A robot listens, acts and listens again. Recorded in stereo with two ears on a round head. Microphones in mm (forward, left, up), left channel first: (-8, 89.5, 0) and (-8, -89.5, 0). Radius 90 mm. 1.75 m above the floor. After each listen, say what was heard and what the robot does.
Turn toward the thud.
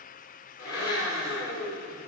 Keep listening.
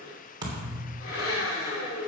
The thud: about 20° right or 160° right. Turn 20° right.
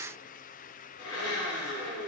Keep listening.
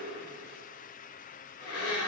I heard a thud, but can't make it out now. It was about straight ahead or 140° right.